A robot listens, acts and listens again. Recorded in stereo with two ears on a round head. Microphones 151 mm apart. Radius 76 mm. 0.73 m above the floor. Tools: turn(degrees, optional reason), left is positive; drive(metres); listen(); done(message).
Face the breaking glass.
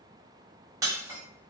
turn(degrees=-20, reason="The breaking glass: about 20° right or 160° right.")
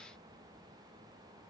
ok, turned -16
listen()
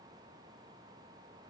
done("I heard breaking glass, but can't make it out now. It was about 5° right or 145° right.")